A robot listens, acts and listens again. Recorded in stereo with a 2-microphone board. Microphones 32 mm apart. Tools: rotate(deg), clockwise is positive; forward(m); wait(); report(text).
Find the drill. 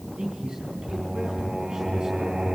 wait()
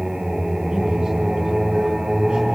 wait()
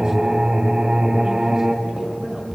report("I can't make out a drill, only a man speaking and singing.")